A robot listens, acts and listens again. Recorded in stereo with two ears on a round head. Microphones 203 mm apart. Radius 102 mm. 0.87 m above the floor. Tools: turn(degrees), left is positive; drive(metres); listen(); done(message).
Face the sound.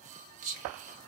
turn(degrees=-35)
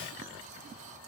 listen()
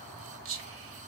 turn(degrees=-110)
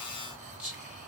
done("Found it: whispering, straight ahead, under 1 m away.")